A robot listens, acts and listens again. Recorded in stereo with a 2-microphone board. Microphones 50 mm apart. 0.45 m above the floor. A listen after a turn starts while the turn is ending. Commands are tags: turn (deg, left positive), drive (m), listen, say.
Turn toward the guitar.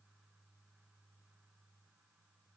<listen/>
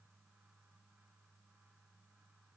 <listen/>
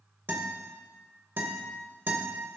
<turn deg="-45"/>
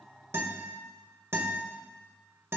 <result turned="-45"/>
<turn deg="-80"/>
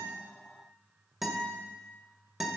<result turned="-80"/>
<say>Found it: a guitar, straight ahead, 1 to 2 m away.</say>